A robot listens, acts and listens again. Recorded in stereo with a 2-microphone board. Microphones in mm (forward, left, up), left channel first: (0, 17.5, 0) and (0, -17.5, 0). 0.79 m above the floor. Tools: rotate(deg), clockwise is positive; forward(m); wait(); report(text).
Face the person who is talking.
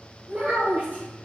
rotate(55)
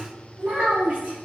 rotate(50)
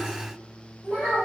rotate(-20)
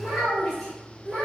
report("Facing the child speaking.")